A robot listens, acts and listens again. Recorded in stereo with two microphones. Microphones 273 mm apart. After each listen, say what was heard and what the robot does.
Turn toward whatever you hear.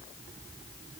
Keep listening.
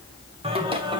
The singing: about 15° right or 165° right. Turn 15° right.
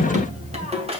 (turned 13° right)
The singing: about 20° right or 160° right. Turn 20° right.
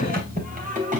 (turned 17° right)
The singing: about 30° right or 150° right. Turn 30° right.
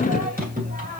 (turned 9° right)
The singing: about 30° right or 150° right. Turn 30° right.
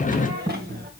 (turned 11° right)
The singing: about 35° right or 145° right. Turn 35° right.
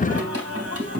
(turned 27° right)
So it is at 120° right. Turn 120° right.
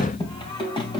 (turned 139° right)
The singing is now 15° left. Turn 15° left.
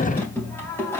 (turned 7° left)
The singing is now 10° left. Turn 10° left.
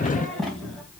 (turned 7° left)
Facing the singing.